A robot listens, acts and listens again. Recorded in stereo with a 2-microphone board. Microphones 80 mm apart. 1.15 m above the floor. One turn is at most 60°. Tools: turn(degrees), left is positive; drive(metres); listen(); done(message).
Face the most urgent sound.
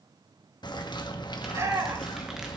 turn(degrees=-40)
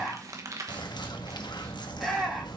done("Facing the shout.")